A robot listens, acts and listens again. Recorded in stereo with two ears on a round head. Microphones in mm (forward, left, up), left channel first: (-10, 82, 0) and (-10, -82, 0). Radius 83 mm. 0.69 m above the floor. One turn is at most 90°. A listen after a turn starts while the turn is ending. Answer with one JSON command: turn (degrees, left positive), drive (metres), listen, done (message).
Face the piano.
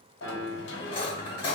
{"turn": -50}
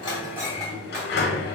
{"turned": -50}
{"listen": true}
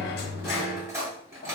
{"listen": true}
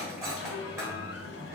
{"done": "I heard a piano, but can't make it out now. It was about straight ahead or 80° right."}